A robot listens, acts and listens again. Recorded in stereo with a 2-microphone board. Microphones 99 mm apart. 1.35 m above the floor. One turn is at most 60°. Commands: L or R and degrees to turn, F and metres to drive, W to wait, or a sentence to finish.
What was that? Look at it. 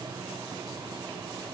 W
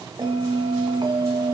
R55
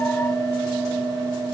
Facing the bell.